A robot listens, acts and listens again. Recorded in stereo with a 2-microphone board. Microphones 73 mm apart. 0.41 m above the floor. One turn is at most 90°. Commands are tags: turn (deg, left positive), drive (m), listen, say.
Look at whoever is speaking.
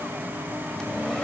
<listen/>
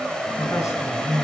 <turn deg="50"/>
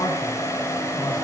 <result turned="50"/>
<turn deg="70"/>
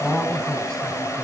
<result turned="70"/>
<turn deg="10"/>
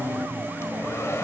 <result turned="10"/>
<listen/>
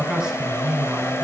<turn deg="-10"/>
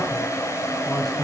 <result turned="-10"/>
<listen/>
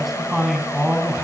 <say>Found it: a man speaking, straight ahead, 2 to 4 m away.</say>